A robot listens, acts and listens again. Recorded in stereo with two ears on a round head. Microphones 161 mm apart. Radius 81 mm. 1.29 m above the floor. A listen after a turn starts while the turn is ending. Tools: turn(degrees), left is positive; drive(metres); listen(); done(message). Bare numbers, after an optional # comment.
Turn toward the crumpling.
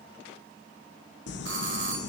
# The crumpling: about 65° left or 115° left.
turn(65)
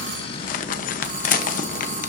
# So it is at 45° left.
turn(45)
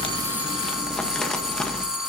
done("Facing the crumpling, 1 to 2 m away.")